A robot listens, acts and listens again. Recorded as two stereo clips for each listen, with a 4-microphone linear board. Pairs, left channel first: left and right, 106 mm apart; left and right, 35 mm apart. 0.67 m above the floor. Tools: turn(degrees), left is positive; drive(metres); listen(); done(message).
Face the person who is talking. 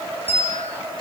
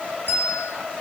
listen()
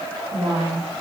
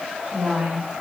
turn(degrees=-75)
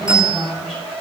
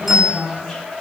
done("Facing the woman speaking, 2 to 4 m away.")